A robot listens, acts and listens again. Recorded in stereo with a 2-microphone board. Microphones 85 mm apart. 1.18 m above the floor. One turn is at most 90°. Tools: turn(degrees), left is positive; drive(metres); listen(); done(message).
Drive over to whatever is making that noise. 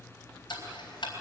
turn(degrees=90)
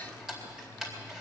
drive(metres=1.0)
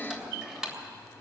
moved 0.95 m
turn(degrees=-10)
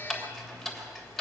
drive(metres=1.0)
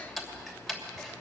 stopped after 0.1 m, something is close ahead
done("Something is in my way. I am facing the ticking but have not reached it.")